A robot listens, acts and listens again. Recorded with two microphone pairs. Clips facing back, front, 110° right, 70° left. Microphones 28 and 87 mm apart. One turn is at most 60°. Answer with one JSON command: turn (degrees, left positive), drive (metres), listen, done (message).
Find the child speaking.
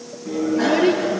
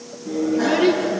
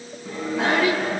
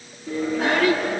{"turn": -40}
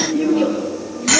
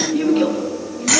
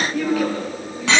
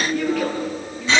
{"turn": -20}
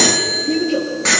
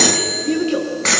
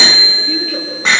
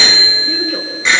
{"done": "Found it: a child speaking, straight ahead."}